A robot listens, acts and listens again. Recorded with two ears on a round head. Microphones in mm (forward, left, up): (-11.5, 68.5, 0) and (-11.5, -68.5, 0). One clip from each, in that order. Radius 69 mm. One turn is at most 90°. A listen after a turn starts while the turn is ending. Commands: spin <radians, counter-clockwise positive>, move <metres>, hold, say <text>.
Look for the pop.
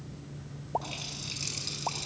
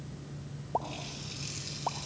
spin 0.52
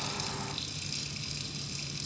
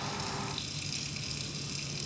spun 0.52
hold
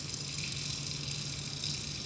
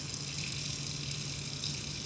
say I heard a pop, but can't make it out now. It was about 20° right or 140° left.